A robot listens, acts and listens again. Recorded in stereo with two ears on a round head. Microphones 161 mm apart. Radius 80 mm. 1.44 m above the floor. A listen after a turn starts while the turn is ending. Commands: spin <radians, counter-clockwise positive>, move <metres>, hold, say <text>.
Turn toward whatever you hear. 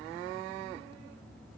hold
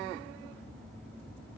hold
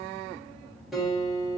spin 0.52
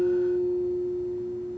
spin -0.52
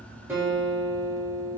spin -0.17
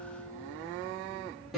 say Facing the guitar, 1 to 2 m away.